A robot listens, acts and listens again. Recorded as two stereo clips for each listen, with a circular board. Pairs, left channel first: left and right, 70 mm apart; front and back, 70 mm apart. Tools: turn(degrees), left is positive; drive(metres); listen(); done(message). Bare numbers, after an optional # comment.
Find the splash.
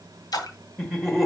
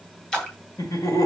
# The splash: 75° left.
turn(75)
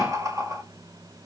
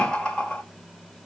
done("I heard a splash from this way, but can't make it out now.")